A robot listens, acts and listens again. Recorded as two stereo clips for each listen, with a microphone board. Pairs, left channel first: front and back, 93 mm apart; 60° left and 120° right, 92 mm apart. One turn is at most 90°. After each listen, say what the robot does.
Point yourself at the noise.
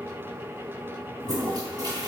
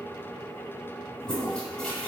Turn 90° left.
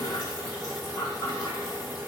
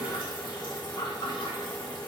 Turn 45° left.
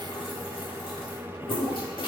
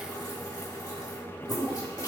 Turn 20° left.
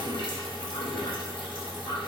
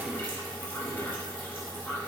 Found it: a toilet flushing, straight ahead, 1 to 2 m away.